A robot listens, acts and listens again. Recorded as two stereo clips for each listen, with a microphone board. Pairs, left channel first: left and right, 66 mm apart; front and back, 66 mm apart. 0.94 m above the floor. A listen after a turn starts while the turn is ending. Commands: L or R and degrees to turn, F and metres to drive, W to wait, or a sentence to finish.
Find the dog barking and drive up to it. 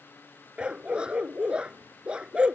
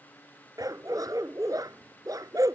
R165
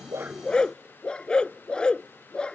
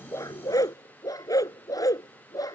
L15
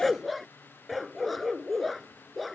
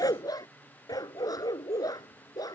F1.0
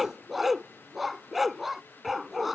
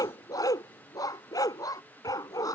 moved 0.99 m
F1.0
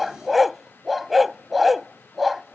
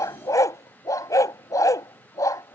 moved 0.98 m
F1.0
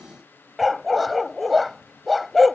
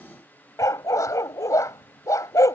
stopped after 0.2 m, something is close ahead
I am next to the dog barking.